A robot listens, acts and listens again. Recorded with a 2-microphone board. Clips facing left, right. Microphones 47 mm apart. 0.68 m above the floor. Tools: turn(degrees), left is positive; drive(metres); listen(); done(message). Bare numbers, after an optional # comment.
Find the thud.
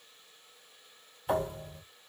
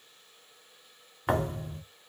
# The thud: about 70° right or 110° right.
turn(-70)
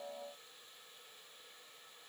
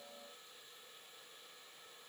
listen()
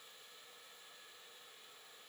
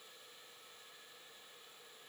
done("I heard a thud, but can't make it out now. It was about straight ahead or 40° right.")